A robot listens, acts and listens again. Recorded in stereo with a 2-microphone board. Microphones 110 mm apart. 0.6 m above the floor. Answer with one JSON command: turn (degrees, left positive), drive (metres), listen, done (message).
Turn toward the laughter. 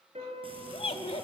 {"turn": 65}
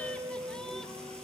{"listen": true}
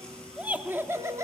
{"turn": -30}
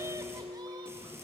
{"listen": true}
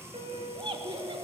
{"turn": -55}
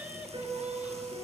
{"listen": true}
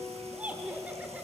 {"turn": -15}
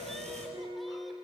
{"listen": true}
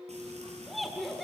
{"done": "Facing the laughter."}